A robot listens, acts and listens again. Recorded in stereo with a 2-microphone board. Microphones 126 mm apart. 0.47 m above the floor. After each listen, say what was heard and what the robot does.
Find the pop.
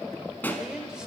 The pop: about 15° left or 165° left. Turn 15° left.
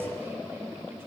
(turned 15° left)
Keep listening.
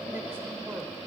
I heard a pop, but can't make it out now. It was about straight ahead or 150° left.